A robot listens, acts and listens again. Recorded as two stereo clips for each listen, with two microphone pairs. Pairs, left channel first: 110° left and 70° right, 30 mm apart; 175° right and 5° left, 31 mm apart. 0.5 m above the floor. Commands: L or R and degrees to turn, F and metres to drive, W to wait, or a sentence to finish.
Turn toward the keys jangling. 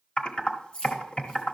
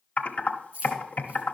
L55
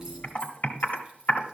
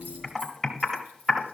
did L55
W
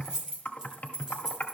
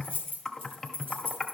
Found it: keys jangling, straight ahead.